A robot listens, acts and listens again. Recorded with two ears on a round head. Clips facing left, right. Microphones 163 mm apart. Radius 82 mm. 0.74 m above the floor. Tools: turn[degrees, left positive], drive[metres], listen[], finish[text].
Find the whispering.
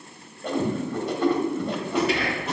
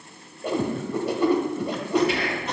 Thought: The whispering: about 65° left or 115° left.
Action: turn[65]
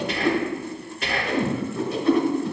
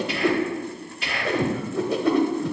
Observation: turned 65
Thought: So it is at 45° left.
Action: turn[45]
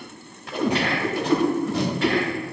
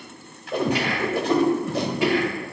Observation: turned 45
Thought: The whispering is now 10° right.
Action: turn[-10]
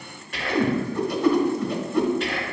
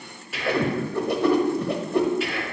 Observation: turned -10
Action: finish[Found it: whispering, straight ahead, 1 to 2 m away.]